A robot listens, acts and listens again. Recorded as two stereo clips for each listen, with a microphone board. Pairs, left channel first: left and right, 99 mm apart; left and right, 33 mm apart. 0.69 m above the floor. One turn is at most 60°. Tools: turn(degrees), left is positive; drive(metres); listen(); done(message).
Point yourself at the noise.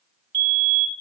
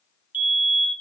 turn(degrees=-55)
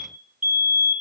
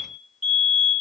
turn(degrees=-10)
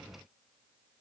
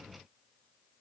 done("Facing the fire alarm.")